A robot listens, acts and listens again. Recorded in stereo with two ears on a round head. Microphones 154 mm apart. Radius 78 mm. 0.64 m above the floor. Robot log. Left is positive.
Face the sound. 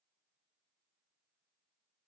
cmd idle
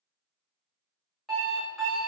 cmd yaw +30
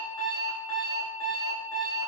note: So it is at 150° left.
cmd yaw +150
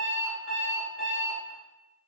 note: The alarm clock is now 60° left.
cmd yaw +60
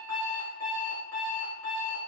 note: The alarm clock is now 10° left.
cmd yaw +10
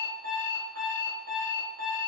end: Facing the alarm clock.